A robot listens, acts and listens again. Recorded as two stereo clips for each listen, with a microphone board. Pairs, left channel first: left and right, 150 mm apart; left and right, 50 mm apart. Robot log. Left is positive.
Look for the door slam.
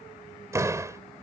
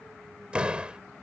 note: The door slam: about 20° right or 160° right.
cmd yaw -20
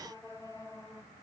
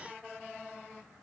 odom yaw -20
cmd idle
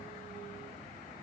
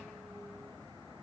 end: I heard a door slam, but can't make it out now. It was about straight ahead or 140° right.